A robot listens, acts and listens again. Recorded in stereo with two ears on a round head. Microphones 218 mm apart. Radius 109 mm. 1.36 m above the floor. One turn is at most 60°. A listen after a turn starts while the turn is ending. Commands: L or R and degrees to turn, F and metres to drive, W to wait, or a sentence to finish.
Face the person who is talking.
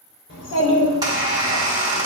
L50
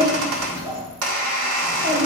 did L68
R10
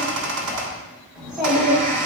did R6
Found it: a child speaking, straight ahead.